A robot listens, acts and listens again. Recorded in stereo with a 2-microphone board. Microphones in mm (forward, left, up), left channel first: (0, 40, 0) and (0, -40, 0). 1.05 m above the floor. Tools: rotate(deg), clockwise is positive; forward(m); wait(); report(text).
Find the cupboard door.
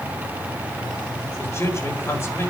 wait()
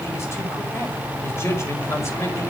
wait()
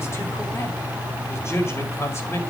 report("I can't make out a cupboard door, only a man speaking.")